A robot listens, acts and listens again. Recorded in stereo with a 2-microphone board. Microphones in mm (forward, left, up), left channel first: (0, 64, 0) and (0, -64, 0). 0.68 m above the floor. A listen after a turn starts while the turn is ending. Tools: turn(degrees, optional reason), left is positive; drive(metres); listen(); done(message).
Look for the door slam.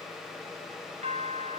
listen()
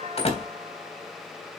turn(degrees=50, reason="The door slam: about 50° left or 130° left.")
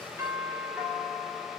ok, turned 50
listen()
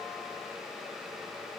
done("I heard a door slam, but can't make it out now. It was about straight ahead or 80° left.")